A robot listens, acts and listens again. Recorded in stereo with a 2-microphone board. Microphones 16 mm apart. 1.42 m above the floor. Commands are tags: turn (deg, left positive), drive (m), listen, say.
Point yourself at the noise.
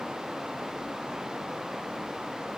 <listen/>
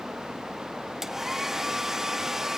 <turn deg="-30"/>
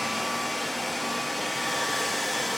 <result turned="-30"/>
<say>Found it: a hair dryer, straight ahead.</say>